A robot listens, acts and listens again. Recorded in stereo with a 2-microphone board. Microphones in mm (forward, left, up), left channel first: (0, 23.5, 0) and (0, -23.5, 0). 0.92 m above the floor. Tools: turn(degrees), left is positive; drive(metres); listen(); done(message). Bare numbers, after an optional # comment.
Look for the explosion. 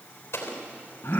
# The explosion: about 65° left or 115° left.
turn(65)
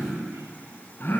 listen()
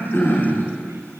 done("I heard an explosion, but can't make it out now. It was about straight ahead or 50° left.")